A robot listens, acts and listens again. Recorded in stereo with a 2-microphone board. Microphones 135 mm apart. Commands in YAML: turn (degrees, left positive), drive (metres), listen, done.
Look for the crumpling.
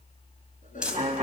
turn: -30
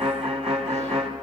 listen: true
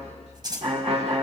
turn: -145
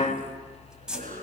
done: "Found it: crumpling, straight ahead, 2 to 4 m away."